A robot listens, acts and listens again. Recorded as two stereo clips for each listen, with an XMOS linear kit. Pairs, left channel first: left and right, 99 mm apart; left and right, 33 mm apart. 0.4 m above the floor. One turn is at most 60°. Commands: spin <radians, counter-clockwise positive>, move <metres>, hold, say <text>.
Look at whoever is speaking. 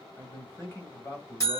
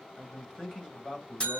spin 0.44
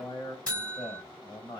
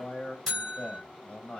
spin 1.05
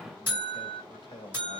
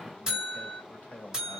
spin 1.05
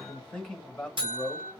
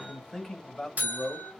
spin 0.17
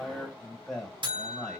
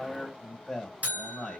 say Found it: a man speaking, straight ahead, 1 to 2 m away.